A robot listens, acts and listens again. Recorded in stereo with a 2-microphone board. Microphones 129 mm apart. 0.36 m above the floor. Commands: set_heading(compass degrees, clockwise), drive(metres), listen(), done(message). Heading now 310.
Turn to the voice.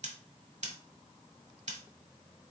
listen()
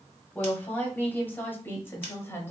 set_heading(290)
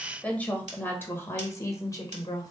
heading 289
set_heading(259)
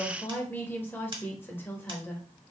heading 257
set_heading(242)
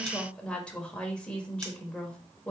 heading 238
set_heading(228)
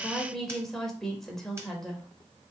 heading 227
done("Facing the woman speaking, 1 to 2 m away.")